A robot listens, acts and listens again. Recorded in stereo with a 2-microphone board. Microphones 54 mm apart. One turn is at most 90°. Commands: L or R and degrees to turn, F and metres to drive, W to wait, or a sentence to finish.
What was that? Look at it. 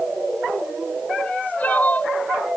L30
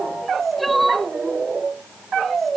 Found it: crying, straight ahead.